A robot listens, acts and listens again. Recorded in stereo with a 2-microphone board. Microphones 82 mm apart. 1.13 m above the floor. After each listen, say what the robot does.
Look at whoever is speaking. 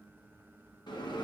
Keep listening.
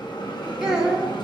Turn 30° right.
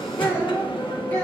Turn 25° left.
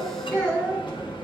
Turn 10° left.
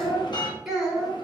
Found it: a child speaking, straight ahead.